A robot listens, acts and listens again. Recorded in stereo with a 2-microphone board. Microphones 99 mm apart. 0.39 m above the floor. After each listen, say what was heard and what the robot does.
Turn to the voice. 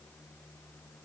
Keep listening.
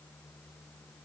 Keep listening.
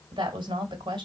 The woman speaking: about 60° right or 120° right. Turn 60° right.
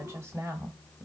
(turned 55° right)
So it is at 35° right. Turn 35° right.
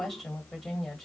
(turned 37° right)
Found it: a woman speaking, straight ahead, 1 to 2 m away.